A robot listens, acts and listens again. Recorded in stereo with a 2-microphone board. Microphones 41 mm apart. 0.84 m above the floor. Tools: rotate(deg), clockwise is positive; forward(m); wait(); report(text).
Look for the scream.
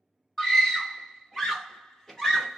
rotate(-30)
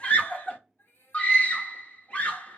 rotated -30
rotate(-130)
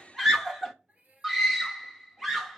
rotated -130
rotate(10)
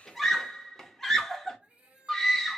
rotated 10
report("Facing the scream, under 1 m away.")